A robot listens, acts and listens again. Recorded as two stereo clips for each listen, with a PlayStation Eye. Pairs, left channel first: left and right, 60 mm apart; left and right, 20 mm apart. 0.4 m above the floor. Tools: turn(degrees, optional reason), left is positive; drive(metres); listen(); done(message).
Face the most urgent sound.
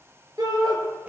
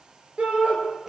turn(degrees=-90)
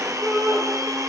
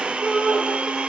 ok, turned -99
done("Facing the shout.")